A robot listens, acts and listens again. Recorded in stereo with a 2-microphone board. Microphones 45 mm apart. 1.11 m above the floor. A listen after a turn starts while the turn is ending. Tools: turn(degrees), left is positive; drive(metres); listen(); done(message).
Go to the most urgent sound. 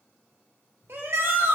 turn(degrees=-60)
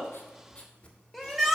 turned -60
drive(metres=1.0)
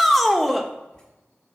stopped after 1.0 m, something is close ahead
done("I am next to the shout.")